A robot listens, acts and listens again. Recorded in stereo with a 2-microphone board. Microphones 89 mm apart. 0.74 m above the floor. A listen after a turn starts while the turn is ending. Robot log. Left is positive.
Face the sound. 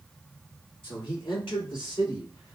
note: The man speaking: about 65° left or 115° left.
cmd yaw +65
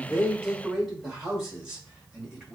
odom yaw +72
note: So it is at 15° right.
cmd yaw -15
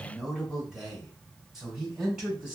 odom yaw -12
end: Facing the man speaking.